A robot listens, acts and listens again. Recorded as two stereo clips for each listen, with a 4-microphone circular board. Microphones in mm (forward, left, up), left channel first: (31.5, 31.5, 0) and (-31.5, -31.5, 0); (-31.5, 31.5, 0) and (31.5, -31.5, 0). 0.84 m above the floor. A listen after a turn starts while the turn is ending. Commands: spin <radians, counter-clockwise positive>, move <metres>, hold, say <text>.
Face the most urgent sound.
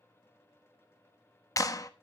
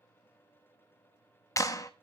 hold
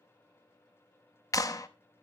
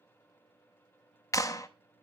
hold
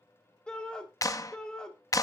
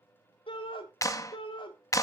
spin 2.18
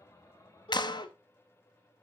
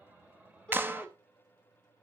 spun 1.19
spin 0.96
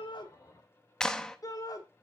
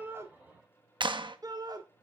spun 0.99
say Facing the shout.